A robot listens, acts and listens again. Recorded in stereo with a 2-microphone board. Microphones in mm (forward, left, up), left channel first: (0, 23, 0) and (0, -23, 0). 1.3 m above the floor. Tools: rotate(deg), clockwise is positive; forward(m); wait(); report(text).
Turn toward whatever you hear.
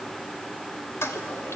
rotate(-90)
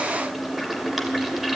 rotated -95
report("Facing the toilet flushing, 2 to 4 m away.")